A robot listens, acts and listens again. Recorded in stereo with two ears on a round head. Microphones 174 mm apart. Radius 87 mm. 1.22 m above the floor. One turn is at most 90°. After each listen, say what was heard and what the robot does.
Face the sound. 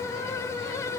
Keep listening.
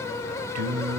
Turn 90° right.
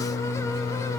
So it is at 25° left. Turn 25° left.
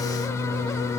The singing is now 15° left. Turn 15° left.
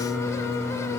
The singing is now 10° left. Turn 10° left.
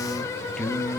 Found it: singing, straight ahead.